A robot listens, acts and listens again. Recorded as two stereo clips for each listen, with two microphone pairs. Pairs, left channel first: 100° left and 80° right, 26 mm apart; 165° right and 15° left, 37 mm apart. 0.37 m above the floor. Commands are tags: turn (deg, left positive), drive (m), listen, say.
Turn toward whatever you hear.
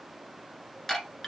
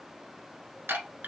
<turn deg="30"/>
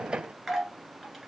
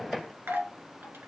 <say>Facing the chime.</say>